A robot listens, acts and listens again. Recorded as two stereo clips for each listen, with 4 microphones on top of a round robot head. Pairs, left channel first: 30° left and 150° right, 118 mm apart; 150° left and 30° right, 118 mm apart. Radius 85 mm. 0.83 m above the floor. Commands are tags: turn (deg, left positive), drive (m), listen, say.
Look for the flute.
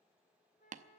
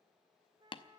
<turn deg="25"/>
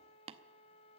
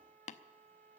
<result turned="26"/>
<say>Found it: a flute, straight ahead, 2 to 4 m away.</say>